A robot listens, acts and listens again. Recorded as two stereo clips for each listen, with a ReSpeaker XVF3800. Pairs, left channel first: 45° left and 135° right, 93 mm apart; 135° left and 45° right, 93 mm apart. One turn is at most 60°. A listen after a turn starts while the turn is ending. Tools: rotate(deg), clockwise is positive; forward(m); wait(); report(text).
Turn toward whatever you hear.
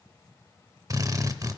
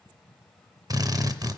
rotate(60)
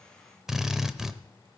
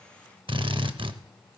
rotate(50)
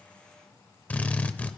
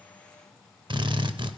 rotate(25)
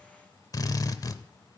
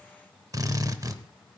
report("Found it: a drill, straight ahead, under 1 m away.")